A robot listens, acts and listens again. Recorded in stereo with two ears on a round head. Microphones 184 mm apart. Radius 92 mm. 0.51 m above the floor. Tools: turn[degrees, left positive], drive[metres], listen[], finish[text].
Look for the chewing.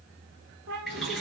Action: listen[]
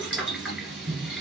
Action: listen[]
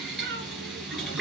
Action: finish[I can't make out chewing, only a cat meowing and boiling.]